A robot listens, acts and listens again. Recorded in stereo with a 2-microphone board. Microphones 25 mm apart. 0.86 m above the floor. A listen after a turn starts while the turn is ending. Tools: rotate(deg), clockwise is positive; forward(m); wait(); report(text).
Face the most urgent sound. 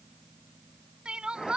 rotate(40)
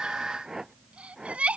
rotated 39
rotate(95)
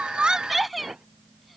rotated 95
report("Facing the crying.")